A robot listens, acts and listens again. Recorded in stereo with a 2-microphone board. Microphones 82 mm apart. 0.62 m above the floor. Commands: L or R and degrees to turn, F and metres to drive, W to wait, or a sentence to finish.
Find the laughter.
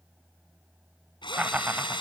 R20
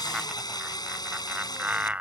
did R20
R20
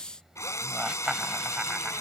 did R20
R30
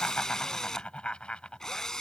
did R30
L10
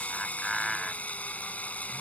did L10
Found it: laughter, straight ahead.